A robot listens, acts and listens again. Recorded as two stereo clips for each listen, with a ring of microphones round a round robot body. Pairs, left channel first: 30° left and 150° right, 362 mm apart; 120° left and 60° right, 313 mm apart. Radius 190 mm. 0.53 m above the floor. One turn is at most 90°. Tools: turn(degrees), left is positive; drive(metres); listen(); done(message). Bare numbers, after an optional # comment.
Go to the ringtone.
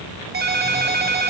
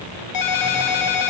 # The ringtone: 145° left.
turn(90)
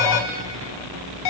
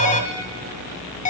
# The ringtone is now 55° left.
turn(55)
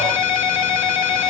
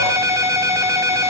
# The ringtone is now 20° left.
turn(20)
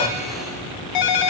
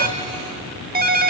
drive(1.0)
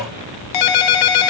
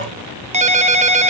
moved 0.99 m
# The ringtone is now 10° left.
turn(10)
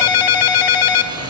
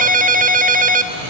drive(1.0)
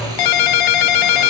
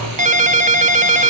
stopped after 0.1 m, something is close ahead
done("Arrived at the ringtone, straight ahead.")